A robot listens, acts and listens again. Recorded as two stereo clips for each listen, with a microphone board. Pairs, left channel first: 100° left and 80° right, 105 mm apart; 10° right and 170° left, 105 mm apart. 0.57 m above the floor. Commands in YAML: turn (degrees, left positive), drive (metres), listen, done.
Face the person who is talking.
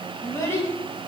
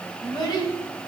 turn: 35
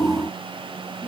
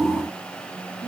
listen: true
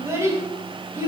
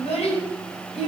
turn: -15
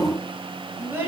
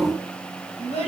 turn: -10
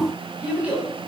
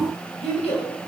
done: "Found it: a child speaking, straight ahead."